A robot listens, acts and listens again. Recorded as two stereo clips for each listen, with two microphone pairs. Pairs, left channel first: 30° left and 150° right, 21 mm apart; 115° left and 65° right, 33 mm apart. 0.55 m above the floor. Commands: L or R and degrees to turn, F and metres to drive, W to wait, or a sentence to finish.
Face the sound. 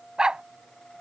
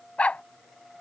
L160
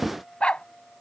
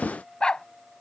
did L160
L55
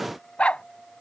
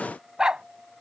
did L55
Facing the dog barking.